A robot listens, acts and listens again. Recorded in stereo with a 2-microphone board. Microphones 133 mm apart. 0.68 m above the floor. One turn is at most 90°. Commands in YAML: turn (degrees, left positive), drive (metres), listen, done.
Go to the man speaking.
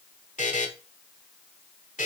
listen: true
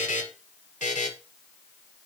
listen: true
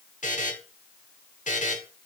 done: "I can't make out a man speaking, only a buzzer."